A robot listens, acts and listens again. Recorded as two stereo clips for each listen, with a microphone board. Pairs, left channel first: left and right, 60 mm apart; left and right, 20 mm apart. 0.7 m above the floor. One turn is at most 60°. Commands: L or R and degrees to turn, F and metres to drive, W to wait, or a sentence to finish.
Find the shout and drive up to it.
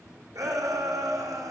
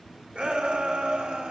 R60
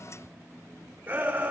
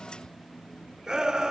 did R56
R30
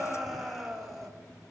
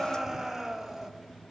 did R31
F1.0
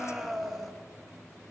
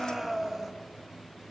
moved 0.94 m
F1.0
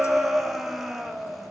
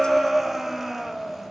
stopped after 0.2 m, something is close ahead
Arrived at the shout, straight ahead.